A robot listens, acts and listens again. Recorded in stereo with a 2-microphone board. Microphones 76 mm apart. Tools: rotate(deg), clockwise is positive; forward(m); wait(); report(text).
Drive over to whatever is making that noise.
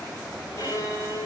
rotate(-50)
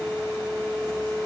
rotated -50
forward(1.0)
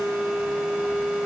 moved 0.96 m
forward(1.0)
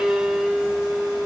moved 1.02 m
rotate(10)
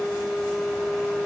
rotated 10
forward(1.0)
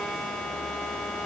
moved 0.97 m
forward(1.0)
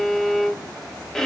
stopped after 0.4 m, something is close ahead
rotate(-10)
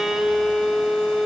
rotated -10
report("Arrived at the violin, straight ahead.")